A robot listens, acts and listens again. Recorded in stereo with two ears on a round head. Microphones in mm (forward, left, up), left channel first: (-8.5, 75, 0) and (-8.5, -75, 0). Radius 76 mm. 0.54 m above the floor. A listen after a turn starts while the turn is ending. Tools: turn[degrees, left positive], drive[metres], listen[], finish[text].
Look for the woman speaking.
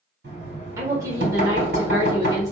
Thought: The woman speaking: about 20° right or 160° right.
Action: turn[-20]
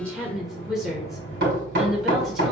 Action: finish[Found it: a woman speaking, straight ahead.]